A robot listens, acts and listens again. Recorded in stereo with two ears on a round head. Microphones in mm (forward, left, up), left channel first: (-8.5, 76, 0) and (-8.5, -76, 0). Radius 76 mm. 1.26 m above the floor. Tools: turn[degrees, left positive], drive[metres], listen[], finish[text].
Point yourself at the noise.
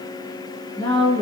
Thought: The woman speaking: about 25° left or 155° left.
Action: turn[25]
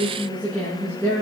Action: turn[30]
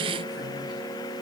Action: listen[]
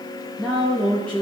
Action: turn[30]
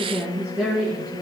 Action: finish[Facing the woman speaking.]